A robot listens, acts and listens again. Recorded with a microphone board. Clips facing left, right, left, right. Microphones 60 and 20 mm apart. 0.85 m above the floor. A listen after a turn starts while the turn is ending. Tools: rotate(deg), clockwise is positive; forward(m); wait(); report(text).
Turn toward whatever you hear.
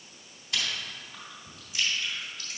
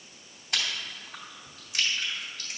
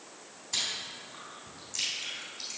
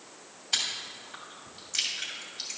rotate(60)
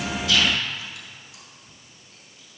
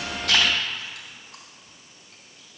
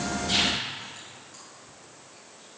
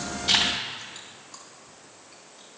wait()
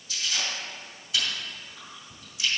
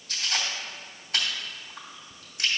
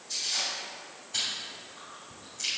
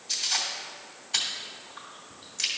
rotate(55)
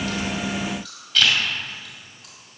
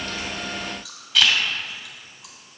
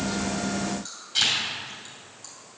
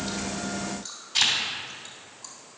report("Facing the chewing.")